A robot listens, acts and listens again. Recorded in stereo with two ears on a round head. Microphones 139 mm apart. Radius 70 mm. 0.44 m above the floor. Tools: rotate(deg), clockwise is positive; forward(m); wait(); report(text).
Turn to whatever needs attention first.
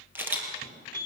rotate(-60)
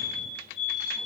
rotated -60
rotate(-50)
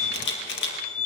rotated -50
report("Found it: a fire alarm, straight ahead, over 4 m away.")